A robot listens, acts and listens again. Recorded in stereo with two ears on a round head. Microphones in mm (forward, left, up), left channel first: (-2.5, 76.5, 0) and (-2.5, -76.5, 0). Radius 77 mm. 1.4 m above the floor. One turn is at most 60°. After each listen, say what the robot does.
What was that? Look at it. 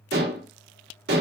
Turn 60° right.
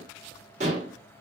Turn 45° right.
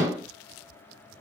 Turn 20° right.
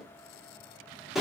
Found it: dishes clattering, straight ahead, under 1 m away.